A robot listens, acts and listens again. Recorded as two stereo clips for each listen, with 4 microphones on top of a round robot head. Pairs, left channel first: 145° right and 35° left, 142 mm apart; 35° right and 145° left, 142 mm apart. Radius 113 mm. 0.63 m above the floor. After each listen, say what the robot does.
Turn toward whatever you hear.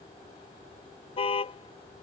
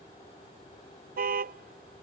Turn 165° left.
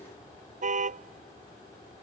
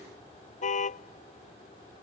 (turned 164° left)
Found it: a car horn, straight ahead.